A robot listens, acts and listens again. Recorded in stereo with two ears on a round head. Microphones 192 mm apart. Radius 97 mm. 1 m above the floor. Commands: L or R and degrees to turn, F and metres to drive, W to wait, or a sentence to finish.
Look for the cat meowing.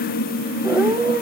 R30
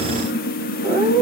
R135
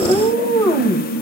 L25
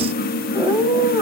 R15
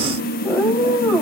Facing the cat meowing, 2 to 4 m away.